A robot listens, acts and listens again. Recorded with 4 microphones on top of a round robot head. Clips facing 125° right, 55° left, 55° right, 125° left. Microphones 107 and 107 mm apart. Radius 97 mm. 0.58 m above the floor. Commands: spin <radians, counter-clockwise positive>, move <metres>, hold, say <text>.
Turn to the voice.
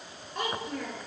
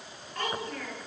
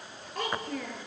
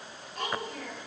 spin -0.96
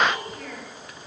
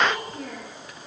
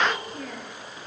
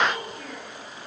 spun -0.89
say Found it: a child speaking, straight ahead, over 4 m away.